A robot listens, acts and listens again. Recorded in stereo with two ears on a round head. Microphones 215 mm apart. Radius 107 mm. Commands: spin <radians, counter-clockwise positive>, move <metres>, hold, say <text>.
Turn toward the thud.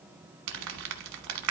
hold
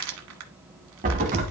spin -0.61
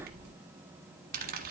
hold
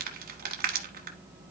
say I heard a thud, but can't make it out now. It was about straight ahead or 110° right.